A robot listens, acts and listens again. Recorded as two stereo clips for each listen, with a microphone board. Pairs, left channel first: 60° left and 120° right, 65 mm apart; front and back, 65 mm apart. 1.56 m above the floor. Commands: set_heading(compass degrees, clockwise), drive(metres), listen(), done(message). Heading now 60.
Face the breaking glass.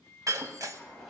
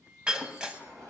set_heading(175)
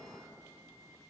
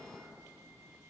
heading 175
done("I heard breaking glass from this way, but can't make it out now.")